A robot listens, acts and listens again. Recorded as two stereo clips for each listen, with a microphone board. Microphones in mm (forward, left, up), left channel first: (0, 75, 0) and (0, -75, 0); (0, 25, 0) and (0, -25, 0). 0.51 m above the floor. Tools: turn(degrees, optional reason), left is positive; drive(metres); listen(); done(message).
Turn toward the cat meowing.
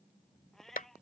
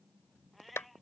turn(degrees=30)
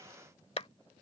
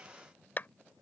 listen()
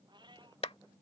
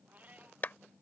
turn(degrees=-30, reason="So it is at 30° right.")
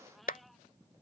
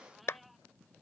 listen()
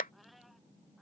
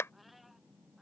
listen()
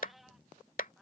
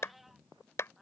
done("Facing the cat meowing.")